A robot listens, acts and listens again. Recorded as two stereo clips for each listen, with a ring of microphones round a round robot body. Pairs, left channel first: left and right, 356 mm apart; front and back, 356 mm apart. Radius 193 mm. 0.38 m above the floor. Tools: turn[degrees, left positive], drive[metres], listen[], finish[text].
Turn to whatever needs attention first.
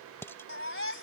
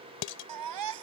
Thought: The baby crying: 145° left.
Action: turn[145]
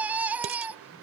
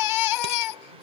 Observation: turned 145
Action: finish[Found it: a baby crying, straight ahead.]